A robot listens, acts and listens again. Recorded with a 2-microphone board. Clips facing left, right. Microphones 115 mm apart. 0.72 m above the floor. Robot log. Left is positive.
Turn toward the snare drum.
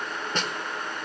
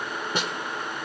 cmd yaw -30
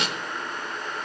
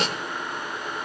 note: So it is at 140° right.
cmd yaw -140
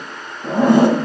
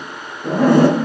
cmd idle
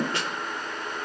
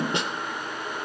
note: The snare drum is now 20° right.
cmd yaw -20
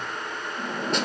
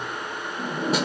cmd idle
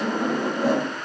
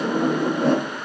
cmd idle
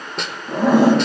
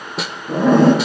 end: Facing the snare drum, 1 to 2 m away.